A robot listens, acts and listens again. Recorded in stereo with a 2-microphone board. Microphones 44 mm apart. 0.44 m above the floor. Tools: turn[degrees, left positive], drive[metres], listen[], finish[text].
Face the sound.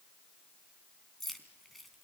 Action: turn[30]
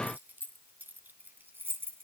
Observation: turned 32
Thought: So it is at 55° right.
Action: turn[-55]
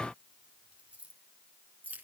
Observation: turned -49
Thought: The keys jangling is now 35° right.
Action: turn[-35]
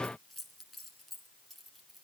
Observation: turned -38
Action: finish[Facing the keys jangling.]